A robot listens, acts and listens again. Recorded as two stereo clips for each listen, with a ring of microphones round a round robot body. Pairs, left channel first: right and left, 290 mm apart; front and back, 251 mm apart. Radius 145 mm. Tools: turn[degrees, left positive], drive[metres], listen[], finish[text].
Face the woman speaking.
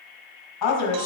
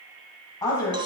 Thought: The woman speaking: 75° right.
Action: turn[-75]
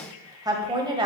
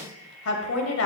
Thought: The woman speaking is now 20° left.
Action: turn[20]
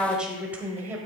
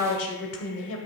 Thought: The woman speaking is now 10° left.
Action: turn[10]
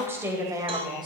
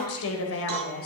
Thought: The woman speaking is now 20° left.
Action: turn[20]
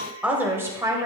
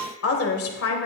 Thought: The woman speaking is now 15° left.
Action: turn[15]
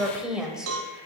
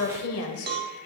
Action: finish[Facing the woman speaking.]